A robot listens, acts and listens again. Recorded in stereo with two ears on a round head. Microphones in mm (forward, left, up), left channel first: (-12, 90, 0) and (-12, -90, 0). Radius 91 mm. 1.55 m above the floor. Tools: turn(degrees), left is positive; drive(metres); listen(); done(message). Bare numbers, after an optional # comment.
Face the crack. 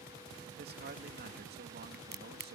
# The crack: about 50° right or 130° right.
turn(-50)
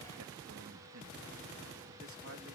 listen()
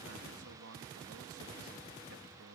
done("I heard a crack, but can't make it out now. It was about straight ahead or 80° right.")